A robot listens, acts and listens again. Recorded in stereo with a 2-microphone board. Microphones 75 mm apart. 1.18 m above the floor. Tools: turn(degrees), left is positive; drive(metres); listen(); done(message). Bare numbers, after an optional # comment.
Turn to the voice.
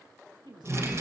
turn(-90)
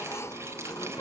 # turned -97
listen()
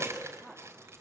listen()
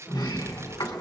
done("Facing where the woman speaking came from. I can't hear it now.")